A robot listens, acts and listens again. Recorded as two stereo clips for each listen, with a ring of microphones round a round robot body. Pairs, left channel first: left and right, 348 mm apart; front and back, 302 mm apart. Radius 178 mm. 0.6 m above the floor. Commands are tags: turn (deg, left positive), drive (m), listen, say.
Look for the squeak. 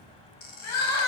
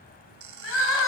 <turn deg="155"/>
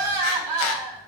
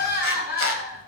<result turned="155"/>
<listen/>
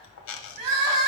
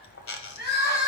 <turn deg="45"/>
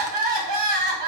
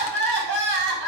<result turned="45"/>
<listen/>
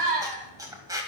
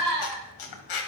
<turn deg="-10"/>
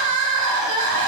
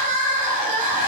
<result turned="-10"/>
<listen/>
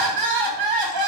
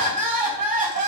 <listen/>
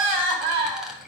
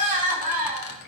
<say>Facing where the squeak came from. I can't hear it now.</say>